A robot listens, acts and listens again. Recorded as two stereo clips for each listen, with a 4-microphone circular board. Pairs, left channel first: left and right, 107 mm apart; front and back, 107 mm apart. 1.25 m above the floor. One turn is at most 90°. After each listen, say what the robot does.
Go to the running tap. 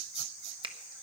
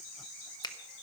Keep listening.
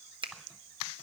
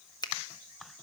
Keep listening.
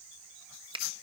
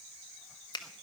I can't make out a running tap, only a finger snap.